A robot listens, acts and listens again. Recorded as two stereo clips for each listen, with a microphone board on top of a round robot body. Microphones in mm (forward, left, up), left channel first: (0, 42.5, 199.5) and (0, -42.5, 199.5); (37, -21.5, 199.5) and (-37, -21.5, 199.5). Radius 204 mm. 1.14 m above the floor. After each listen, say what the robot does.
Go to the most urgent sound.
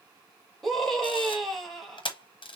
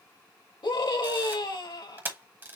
Drive 1.0 m forward.
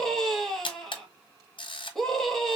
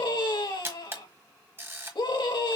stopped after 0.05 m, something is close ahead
Blocked. The scream is further on, straight ahead.